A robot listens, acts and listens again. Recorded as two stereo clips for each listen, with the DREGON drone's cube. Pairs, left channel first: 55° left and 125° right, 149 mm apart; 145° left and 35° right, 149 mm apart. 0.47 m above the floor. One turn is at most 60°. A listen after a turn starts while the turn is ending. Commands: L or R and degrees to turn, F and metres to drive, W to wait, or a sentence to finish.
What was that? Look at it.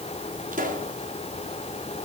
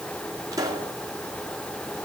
R60
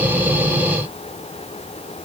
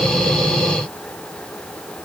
R45
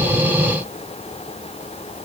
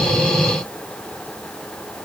I heard a pop from this way, but can't make it out now.